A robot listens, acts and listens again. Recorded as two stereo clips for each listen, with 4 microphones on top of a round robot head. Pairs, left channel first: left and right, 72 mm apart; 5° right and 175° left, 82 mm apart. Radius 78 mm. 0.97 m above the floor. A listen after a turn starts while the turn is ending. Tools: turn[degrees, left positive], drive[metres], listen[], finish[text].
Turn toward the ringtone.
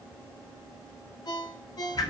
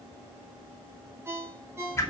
Thought: The ringtone: 115° left.
Action: turn[115]
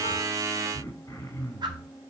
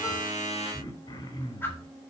Action: listen[]
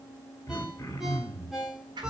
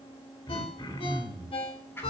Action: finish[Found it: a ringtone, straight ahead, 2 to 4 m away.]